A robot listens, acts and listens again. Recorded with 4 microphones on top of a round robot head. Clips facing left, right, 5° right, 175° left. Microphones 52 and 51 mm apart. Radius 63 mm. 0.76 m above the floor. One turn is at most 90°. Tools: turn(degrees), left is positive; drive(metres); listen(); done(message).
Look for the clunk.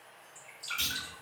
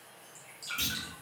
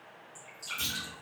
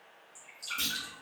turn(degrees=-90)
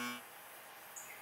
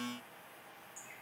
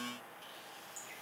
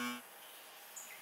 turn(degrees=-65)
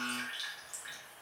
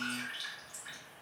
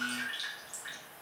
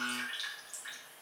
done("Facing where the clunk came from. I can't hear it now.")